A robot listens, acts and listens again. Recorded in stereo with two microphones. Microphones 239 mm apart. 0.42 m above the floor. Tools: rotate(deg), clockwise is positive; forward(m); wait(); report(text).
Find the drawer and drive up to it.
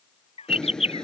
rotate(-30)
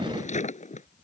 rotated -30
rotate(-150)
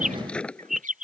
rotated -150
forward(1.0)
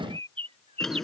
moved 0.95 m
forward(1.0)
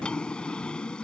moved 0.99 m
forward(1.0)
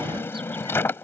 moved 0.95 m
rotate(-10)
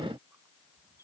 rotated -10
wait()
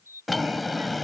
forward(1.0)
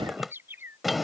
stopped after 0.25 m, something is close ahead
report("I am next to the drawer.")